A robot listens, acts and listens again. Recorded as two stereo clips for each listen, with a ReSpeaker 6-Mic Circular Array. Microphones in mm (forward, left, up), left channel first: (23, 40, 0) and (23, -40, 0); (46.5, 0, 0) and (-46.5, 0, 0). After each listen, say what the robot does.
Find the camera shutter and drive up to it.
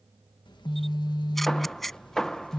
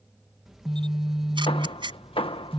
Turn 180° left.
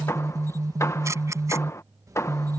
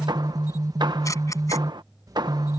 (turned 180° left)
Turn 45° right.
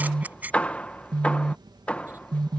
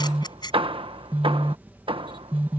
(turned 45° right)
Turn 25° right.
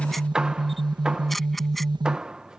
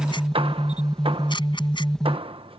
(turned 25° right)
Drive 1.0 m forward.
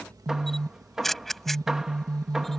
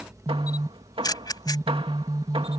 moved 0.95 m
Drive 1.0 m forward.
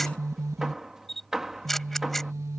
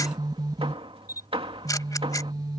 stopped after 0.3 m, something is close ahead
Arrived at the camera shutter, straight ahead.